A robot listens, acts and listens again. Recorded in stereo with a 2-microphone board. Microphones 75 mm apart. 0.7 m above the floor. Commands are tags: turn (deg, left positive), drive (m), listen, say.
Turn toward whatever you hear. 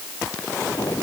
<turn deg="60"/>
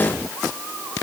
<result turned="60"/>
<say>Facing the explosion.</say>